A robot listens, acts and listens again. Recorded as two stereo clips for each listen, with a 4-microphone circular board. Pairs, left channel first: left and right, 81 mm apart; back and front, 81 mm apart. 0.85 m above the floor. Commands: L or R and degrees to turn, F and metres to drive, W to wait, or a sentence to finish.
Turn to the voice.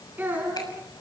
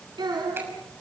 R25
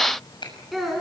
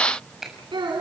Facing the child speaking.